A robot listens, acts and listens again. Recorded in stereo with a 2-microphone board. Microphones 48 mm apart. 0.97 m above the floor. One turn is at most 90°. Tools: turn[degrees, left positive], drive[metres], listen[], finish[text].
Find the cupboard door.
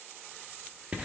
Action: listen[]
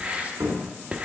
Action: turn[-90]
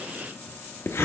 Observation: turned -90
Action: listen[]
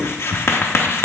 Action: listen[]
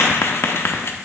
Action: finish[Facing where the cupboard door came from. I can't hear it now.]